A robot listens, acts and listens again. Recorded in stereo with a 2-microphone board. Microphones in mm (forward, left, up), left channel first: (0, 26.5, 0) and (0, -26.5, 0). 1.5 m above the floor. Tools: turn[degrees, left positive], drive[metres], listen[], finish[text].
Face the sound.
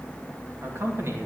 Thought: The man speaking: about 50° right or 130° right.
Action: turn[-50]
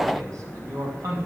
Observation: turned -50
Thought: So it is at 85° right.
Action: turn[-85]
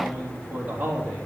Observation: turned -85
Thought: The man speaking is now 25° right.
Action: turn[-25]
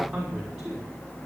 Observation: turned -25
Action: finish[Facing the man speaking.]